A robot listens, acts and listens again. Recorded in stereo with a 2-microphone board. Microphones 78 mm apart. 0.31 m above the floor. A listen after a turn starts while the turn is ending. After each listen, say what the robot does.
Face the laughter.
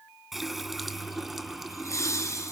Turn 40° left.
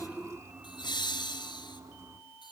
Turn 110° left.
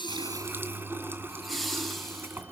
Found it: laughter, straight ahead.